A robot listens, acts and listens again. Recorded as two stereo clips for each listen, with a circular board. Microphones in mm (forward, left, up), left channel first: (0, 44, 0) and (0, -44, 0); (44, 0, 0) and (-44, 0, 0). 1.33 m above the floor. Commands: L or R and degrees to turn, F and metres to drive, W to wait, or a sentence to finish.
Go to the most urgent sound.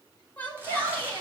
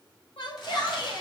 L20
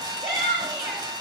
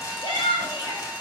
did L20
F1.0
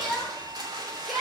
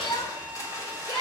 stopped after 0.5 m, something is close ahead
Blocked. The shout is further on, straight ahead.